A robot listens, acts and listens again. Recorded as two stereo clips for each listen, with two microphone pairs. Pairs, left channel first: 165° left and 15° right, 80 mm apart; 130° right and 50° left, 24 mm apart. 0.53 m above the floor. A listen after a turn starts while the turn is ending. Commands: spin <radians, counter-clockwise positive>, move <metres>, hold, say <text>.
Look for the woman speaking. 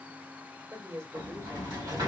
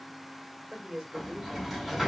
spin 0.52
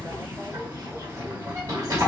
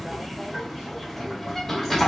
hold
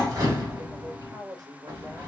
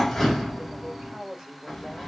say Facing the woman speaking.